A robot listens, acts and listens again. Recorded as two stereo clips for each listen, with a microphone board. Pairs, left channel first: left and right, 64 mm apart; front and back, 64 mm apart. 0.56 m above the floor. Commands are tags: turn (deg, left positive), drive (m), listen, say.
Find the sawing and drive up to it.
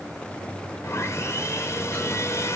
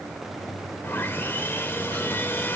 <turn deg="55"/>
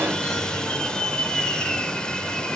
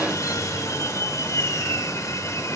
<turn deg="15"/>
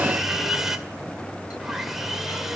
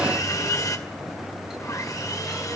<drive m="1.0"/>
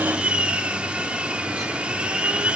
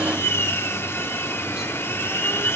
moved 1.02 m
<turn deg="-25"/>
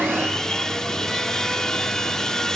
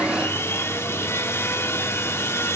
<turn deg="10"/>
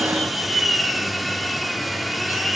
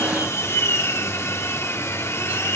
<drive m="1.0"/>
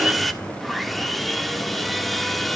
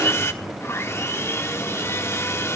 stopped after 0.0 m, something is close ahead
<say>I am next to the sawing.</say>